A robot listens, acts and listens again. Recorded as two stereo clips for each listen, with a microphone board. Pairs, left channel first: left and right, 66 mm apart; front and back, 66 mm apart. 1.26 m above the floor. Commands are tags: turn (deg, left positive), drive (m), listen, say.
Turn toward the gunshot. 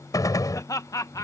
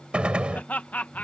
<turn deg="110"/>
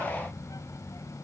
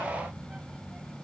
<say>I heard a gunshot from this way, but can't make it out now.</say>